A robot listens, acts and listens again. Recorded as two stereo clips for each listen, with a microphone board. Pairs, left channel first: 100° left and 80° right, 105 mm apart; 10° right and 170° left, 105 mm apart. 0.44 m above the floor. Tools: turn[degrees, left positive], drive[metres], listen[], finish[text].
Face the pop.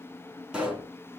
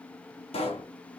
Action: finish[Found it: a pop, straight ahead, 2 to 4 m away.]